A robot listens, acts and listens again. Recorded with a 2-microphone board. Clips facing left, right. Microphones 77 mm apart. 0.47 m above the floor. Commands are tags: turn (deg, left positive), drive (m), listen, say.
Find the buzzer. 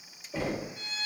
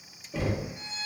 <listen/>
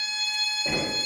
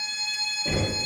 <listen/>
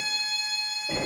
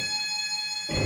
<say>I can't make out a buzzer to turn to.</say>